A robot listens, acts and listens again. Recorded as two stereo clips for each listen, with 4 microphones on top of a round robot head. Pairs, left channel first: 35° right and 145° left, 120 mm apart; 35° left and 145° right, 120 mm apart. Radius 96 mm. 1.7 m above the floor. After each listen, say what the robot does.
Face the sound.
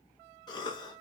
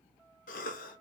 Turn 20° left.
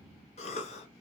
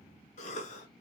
Found it: a cough, straight ahead.